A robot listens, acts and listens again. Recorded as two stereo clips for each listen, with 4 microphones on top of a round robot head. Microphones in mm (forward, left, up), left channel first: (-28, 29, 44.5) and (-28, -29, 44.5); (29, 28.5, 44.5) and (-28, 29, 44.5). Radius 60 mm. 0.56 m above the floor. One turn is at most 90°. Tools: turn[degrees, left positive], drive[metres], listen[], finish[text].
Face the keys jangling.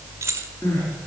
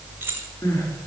Thought: The keys jangling: 125° right.
Action: turn[-90]
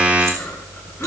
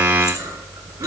Thought: Nothing new. It was at 35° right.
Action: turn[-35]
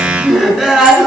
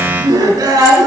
Action: listen[]
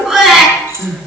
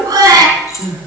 Thought: The keys jangling is now 35° right.
Action: turn[-35]
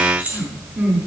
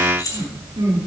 Thought: The keys jangling is now 20° right.
Action: turn[-20]
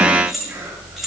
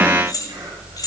Action: finish[Found it: keys jangling, straight ahead.]